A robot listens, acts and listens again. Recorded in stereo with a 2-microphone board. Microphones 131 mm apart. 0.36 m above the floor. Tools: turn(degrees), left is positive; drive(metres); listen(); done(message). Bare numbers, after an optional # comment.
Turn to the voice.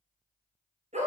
listen()
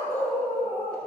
listen()
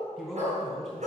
turn(30)
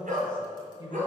# So it is at 140° left.
turn(140)
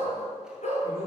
listen()
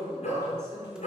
# The man speaking is now 20° right.
turn(-20)
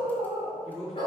done("Facing the man speaking, over 4 m away.")